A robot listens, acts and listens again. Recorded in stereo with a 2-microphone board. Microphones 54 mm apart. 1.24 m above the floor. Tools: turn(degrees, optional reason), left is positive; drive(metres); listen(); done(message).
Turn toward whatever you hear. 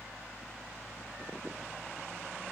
listen()
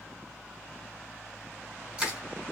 turn(degrees=-25, reason="The crushing: about 25° right or 155° right.")
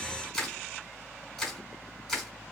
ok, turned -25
done("Found it: crushing, straight ahead.")